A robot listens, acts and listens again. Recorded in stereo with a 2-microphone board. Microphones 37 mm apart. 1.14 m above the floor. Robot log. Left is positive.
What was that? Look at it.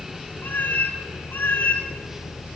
note: The cat meowing: about 55° left or 125° left.
cmd yaw +55
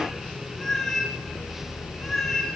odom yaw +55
end: Found it: a cat meowing, straight ahead, over 4 m away.